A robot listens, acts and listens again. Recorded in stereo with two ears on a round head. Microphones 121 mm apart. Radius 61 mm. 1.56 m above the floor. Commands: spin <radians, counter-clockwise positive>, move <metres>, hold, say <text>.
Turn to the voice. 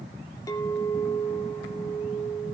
hold
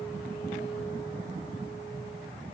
hold
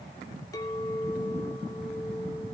say I can't make out anyone speaking, only a clink.